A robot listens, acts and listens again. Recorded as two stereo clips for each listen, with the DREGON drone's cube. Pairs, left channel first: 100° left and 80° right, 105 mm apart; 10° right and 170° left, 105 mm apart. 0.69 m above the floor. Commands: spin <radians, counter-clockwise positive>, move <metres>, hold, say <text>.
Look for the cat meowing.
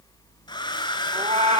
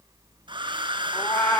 spin -1.22
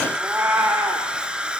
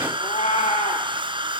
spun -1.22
spin -0.17
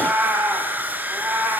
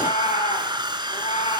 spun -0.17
say Found it: a cat meowing, straight ahead.